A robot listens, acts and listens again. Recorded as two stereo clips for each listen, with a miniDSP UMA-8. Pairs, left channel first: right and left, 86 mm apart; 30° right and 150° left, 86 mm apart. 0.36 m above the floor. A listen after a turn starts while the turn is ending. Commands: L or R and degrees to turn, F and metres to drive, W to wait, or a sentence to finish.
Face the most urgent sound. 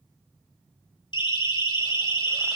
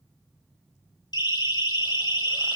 R70
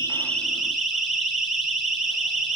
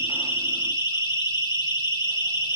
Found it: a siren, straight ahead.